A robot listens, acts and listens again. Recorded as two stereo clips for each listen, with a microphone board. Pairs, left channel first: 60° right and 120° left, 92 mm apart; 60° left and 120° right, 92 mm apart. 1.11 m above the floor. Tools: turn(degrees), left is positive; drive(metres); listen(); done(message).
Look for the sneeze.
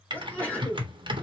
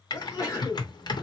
turn(degrees=10)
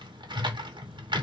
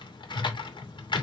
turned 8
done("Facing where the sneeze came from. I can't hear it now.")